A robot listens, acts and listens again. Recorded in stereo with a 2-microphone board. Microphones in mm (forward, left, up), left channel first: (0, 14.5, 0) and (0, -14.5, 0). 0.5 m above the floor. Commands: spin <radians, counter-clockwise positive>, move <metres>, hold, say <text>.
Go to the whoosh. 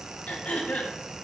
hold
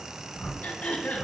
spin 1.13
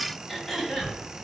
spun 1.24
spin 0.70
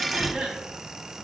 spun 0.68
move 1.0
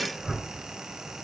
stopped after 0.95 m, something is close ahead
say Arrived at the whoosh, straight ahead.